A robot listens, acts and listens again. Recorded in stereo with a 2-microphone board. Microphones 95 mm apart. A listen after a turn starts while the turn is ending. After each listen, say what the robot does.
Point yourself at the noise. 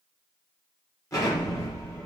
Turn 35° left.
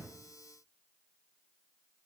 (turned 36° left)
Keep listening.
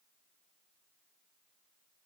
I heard an explosion, but can't make it out now. It was about straight ahead or 110° left.